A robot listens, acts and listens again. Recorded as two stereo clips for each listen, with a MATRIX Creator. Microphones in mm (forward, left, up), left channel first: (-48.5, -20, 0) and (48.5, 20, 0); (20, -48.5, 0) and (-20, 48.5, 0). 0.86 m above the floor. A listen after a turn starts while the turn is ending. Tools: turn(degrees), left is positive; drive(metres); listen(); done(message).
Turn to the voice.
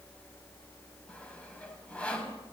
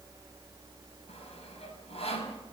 listen()
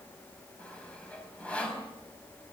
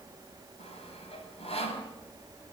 listen()
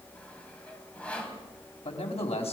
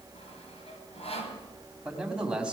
turn(degrees=-165)
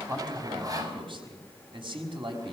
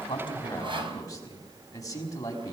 turn(degrees=-10)
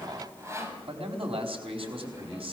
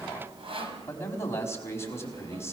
done("Facing the man speaking, over 4 m away.")